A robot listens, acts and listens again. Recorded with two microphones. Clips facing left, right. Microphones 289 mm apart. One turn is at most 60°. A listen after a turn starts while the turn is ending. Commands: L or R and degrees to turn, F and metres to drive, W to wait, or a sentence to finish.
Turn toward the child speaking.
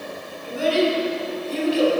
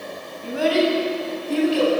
R60
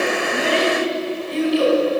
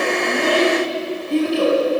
R55
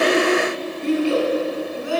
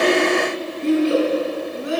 R25
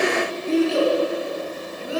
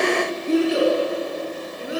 R20
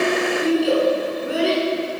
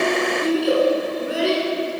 Facing the child speaking, over 4 m away.